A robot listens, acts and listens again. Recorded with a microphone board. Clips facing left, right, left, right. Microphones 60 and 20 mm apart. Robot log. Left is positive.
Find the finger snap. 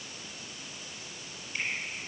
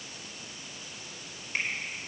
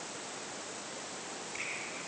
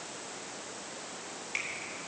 note: The finger snap: about 65° right or 115° right.
cmd yaw -65
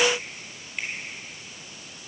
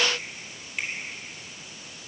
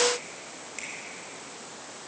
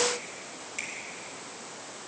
end: Facing the finger snap.